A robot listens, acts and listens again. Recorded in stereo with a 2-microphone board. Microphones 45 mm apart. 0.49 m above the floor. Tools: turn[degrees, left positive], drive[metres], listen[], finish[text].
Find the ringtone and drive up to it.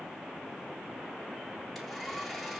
Action: listen[]
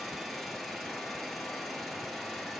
Action: listen[]
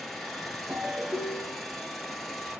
Thought: The ringtone: about 50° right or 130° right.
Action: turn[-50]
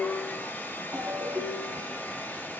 Thought: So it is at 80° right.
Action: turn[-80]
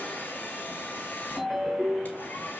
Action: drive[1.0]
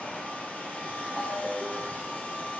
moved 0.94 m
Action: drive[1.0]
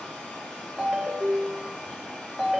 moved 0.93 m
Thought: The ringtone is now 10° right.
Action: turn[-10]
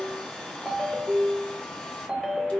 Action: drive[1.0]
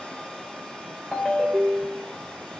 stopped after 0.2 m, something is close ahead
Action: finish[Arrived at the ringtone, straight ahead.]